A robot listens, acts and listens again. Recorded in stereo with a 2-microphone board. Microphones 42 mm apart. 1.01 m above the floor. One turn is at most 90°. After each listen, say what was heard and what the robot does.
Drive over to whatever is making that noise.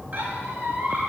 The squeak: about 45° right or 135° right. Turn 45° right.
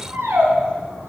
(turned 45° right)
So it is at 85° right. Turn 85° right.
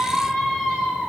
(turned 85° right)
The squeak is now 20° left. Turn 20° left.
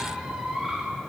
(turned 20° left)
Drive 1.0 m forward.
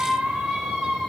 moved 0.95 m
The squeak is now 10° right. Turn 10° right.
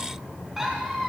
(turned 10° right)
Drive 1.0 m forward.
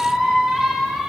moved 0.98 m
Drive 1.0 m forward.
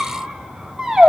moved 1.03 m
The squeak is now 10° right. Turn 10° right.
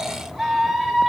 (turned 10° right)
Drive 1.0 m forward.
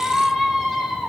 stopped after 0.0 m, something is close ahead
Arrived at the squeak, straight ahead.